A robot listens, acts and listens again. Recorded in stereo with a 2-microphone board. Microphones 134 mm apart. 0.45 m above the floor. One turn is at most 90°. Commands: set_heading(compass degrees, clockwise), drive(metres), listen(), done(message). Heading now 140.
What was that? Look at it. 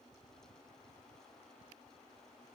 listen()
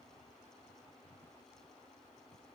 listen()
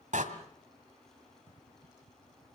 set_heading(210)
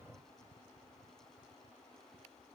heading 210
listen()
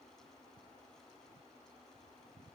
done("I heard a door slam, but can't make it out now. It was about straight ahead or 40° right.")